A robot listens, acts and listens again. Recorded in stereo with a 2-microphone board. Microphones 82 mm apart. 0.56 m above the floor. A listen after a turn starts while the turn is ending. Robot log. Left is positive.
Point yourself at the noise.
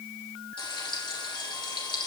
cmd yaw +90
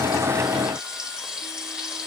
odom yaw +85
note: So it is at 10° right.
cmd yaw -10
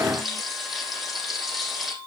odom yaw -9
end: Facing the frying, over 4 m away.